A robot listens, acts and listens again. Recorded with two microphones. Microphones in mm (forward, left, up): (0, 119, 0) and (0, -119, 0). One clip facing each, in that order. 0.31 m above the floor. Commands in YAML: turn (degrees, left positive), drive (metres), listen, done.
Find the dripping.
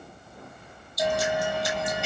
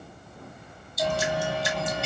turn: -25
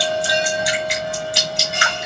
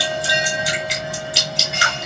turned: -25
done: "Facing the dripping."